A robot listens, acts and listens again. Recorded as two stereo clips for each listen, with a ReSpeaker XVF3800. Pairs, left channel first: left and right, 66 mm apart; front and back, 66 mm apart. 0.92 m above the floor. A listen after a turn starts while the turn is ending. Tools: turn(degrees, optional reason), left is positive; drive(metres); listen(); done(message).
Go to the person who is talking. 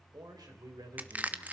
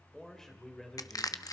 turn(degrees=-80, reason="The man speaking: 80° right.")
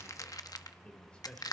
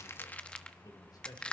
turn(degrees=15, reason="The man speaking is now 15° left.")
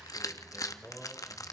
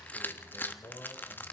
drive(metres=1.0)
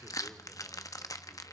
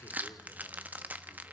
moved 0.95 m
listen()
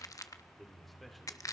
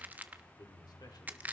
drive(metres=1.0)
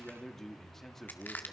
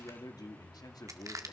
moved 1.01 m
drive(metres=1.0)
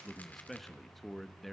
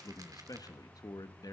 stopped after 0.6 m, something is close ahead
done("Arrived at the man speaking, straight ahead.")